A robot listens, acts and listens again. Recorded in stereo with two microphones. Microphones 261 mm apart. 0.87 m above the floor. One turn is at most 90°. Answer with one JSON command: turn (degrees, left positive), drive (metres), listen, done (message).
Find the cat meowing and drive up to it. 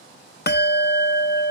{"listen": true}
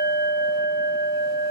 {"listen": true}
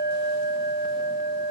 {"done": "I can't make out a cat meowing, only a bell."}